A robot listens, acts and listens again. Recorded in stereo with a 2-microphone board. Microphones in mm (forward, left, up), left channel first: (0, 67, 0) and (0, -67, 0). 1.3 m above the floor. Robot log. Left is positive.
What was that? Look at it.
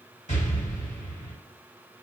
note: The explosion: about 60° left or 120° left.
cmd yaw +60
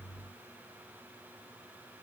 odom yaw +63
cmd idle
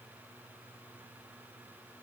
end: I heard an explosion, but can't make it out now. It was about straight ahead or 55° left.